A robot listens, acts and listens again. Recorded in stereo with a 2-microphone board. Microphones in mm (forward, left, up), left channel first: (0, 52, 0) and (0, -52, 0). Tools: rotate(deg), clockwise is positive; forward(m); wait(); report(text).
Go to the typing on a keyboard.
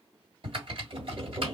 rotate(55)
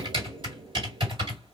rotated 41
rotate(60)
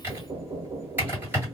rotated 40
rotate(20)
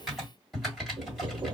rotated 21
forward(1.0)
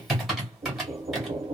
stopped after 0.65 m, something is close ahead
report("Arrived at the typing on a keyboard, straight ahead.")